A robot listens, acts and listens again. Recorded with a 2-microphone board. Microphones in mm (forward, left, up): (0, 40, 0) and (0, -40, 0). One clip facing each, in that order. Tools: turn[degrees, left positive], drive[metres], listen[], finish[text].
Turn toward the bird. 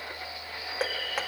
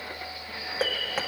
Action: turn[-90]
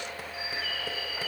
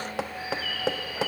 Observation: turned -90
Action: finish[Facing the bird, 2 to 4 m away.]